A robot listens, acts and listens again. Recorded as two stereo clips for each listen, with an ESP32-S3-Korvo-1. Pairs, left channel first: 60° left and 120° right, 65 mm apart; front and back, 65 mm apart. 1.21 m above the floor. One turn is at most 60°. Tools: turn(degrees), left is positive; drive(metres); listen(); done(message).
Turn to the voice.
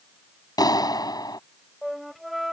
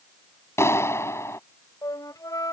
listen()
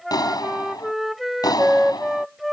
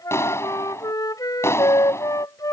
listen()
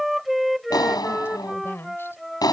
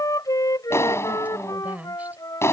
turn(degrees=60)
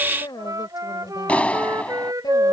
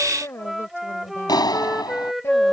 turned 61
turn(degrees=50)
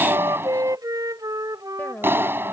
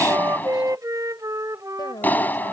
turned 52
done("Found it: a woman speaking, straight ahead.")